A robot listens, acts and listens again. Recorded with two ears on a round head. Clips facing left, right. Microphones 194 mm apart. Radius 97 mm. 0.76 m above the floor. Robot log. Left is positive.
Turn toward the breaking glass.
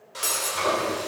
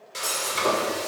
note: The breaking glass: about 30° left or 150° left.
cmd yaw +30
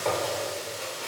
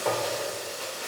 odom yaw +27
cmd idle
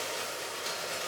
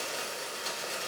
end: I heard breaking glass, but can't make it out now. It was about 5° left or 120° left.